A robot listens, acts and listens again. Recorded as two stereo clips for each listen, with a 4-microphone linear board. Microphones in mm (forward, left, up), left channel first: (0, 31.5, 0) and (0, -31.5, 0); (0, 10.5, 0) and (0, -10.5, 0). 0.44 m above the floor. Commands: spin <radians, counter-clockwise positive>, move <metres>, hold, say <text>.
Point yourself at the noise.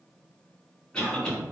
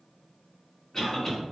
spin 0.52
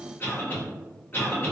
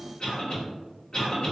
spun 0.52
spin 2.36
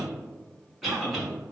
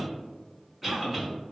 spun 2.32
say Found it: a cough, straight ahead.